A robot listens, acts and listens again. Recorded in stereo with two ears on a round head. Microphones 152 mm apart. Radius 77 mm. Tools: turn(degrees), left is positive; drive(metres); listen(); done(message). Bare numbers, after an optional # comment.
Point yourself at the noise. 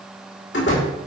# The door slam: about 75° left or 105° left.
turn(75)
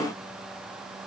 listen()
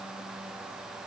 done("I heard a door slam, but can't make it out now. It was about straight ahead or 30° left.")